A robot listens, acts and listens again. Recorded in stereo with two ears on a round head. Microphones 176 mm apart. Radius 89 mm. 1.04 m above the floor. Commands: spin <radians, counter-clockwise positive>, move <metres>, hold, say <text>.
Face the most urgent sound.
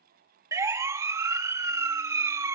spin -0.26
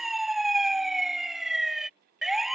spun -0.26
say Found it: a siren, straight ahead.